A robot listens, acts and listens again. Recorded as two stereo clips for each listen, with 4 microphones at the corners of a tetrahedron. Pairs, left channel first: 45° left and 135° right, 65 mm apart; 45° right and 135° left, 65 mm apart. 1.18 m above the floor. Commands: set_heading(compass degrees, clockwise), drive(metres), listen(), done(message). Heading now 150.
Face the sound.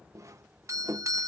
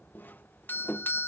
set_heading(250)
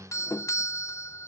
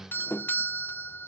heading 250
set_heading(240)
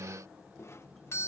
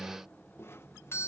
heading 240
done("Found it: a doorbell, straight ahead.")